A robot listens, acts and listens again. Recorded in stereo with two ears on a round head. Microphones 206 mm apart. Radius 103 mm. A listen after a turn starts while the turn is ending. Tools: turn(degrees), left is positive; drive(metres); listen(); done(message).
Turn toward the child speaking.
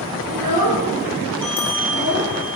turn(degrees=-90)
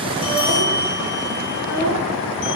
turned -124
turn(degrees=35)
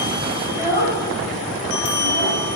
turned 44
turn(degrees=-15)
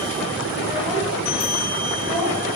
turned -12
listen()
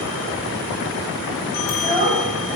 done("Facing the child speaking.")